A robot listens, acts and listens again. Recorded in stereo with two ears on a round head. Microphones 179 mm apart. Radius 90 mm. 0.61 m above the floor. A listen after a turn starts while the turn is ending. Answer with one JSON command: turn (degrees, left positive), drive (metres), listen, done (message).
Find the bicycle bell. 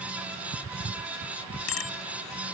{"turn": 90}
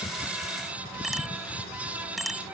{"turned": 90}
{"done": "Found it: a bicycle bell, straight ahead."}